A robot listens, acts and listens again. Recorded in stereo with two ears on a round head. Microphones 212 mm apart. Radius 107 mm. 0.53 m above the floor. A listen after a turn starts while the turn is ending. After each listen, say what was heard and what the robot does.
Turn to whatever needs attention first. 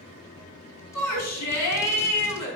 The shout: about 75° left or 105° left. Turn 75° left.
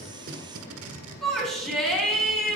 Facing the shout.